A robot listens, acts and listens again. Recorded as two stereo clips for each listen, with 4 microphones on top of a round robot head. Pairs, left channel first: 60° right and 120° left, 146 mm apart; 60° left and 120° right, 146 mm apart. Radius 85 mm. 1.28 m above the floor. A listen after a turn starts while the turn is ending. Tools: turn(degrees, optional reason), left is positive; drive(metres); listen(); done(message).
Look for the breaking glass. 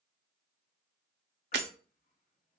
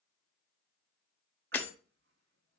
turn(degrees=135, reason="The breaking glass: 135° left.")
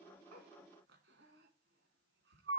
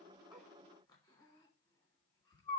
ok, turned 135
done("I heard breaking glass from this way, but can't make it out now.")